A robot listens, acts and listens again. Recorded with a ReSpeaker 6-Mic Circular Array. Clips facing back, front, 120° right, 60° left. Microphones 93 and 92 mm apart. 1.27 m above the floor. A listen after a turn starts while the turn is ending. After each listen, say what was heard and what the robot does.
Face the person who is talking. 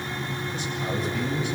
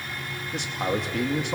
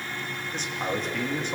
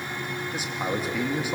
The man speaking: 20° right. Turn 20° right.
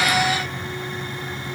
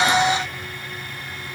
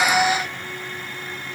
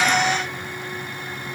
Keep listening.
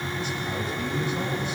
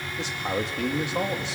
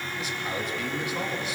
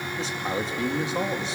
Facing the man speaking.